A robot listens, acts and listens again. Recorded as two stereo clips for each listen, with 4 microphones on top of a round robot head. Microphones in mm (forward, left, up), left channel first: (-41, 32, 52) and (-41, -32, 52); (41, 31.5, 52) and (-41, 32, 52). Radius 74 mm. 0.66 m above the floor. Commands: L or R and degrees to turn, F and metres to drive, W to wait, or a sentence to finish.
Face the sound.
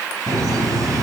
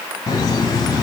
R50
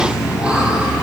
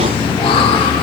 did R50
R10
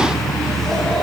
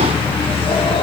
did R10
Facing the laughter.